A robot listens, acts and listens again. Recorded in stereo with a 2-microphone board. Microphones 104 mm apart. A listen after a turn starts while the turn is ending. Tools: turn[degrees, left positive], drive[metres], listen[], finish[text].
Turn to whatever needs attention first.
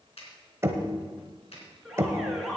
Action: turn[30]
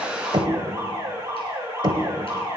Thought: So it is at 30° right.
Action: turn[-30]
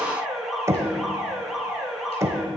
Action: finish[Found it: an alarm, straight ahead, 2 to 4 m away.]